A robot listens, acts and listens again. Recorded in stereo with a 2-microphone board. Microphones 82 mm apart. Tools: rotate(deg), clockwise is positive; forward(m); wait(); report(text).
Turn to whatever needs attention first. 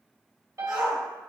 rotate(45)
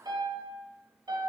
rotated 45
wait()
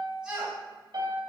rotate(10)
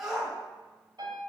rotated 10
report("Found it: a shout, straight ahead.")